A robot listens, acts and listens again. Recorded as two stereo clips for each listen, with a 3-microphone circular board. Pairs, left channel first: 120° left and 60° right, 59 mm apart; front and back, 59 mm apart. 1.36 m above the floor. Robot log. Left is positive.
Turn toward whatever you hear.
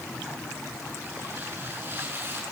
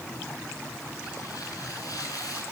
end: Facing the tearing paper.